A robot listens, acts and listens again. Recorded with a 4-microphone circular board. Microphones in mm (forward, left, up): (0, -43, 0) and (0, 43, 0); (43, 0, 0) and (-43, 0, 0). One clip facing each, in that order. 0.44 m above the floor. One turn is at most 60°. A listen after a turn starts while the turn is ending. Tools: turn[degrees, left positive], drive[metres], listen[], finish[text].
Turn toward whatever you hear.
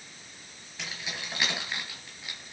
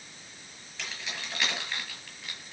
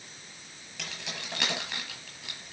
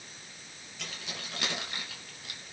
Thought: The keys jangling: 15° right.
Action: turn[-15]
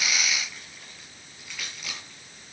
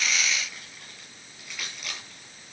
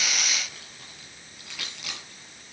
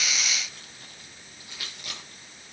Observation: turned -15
Action: finish[Facing the keys jangling, over 4 m away.]